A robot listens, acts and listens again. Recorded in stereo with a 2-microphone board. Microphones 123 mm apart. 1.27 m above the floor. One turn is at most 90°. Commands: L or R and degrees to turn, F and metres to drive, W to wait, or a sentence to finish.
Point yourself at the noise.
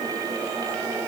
W
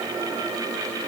W
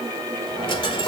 L40
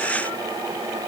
W
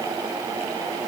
I heard a dropped coin, but can't make it out now. It was about straight ahead or 100° left.